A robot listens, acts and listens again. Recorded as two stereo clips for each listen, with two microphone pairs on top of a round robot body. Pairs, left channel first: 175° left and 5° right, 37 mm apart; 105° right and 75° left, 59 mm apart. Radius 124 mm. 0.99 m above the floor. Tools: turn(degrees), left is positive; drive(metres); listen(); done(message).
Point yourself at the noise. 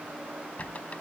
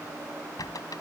turn(degrees=-130)
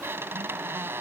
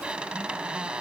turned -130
done("Facing the squeak.")